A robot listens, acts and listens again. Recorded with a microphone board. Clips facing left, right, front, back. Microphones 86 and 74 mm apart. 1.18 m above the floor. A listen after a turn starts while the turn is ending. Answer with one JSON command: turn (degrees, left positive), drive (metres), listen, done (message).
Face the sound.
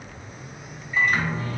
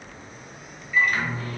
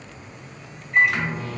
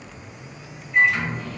{"turn": 30}
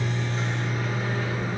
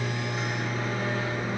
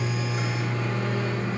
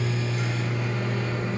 {"turn": -10}
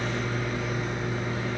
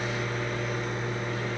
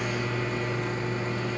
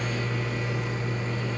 {"done": "Facing the microwave, 1 to 2 m away."}